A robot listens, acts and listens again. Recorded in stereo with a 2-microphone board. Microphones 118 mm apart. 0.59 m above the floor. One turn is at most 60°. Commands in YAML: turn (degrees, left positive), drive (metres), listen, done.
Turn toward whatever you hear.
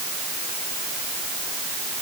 listen: true
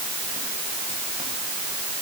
listen: true
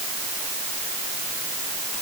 done: "I can't make out anything to turn to."